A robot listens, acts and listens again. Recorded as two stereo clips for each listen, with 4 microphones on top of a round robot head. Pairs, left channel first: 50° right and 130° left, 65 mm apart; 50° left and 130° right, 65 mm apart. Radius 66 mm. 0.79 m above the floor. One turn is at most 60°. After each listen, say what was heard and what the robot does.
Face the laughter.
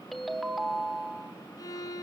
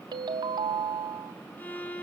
Keep listening.
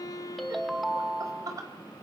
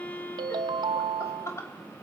The laughter: 95° left. Turn 60° left.
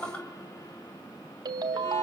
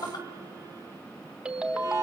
The laughter is now 25° left. Turn 25° left.
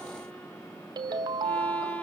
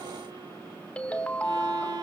Keep listening.
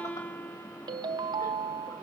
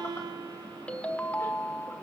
Keep listening.
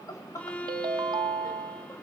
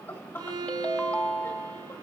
Facing the laughter.